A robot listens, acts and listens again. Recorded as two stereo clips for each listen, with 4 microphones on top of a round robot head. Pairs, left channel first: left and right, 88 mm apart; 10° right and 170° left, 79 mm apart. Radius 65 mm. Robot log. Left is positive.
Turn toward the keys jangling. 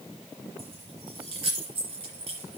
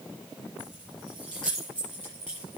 note: The keys jangling: 95° right.
cmd yaw -95
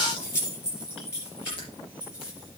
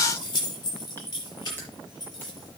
note: The keys jangling is now 25° left.
cmd yaw +25
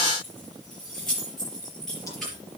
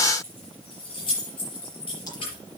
end: Facing the keys jangling, over 4 m away.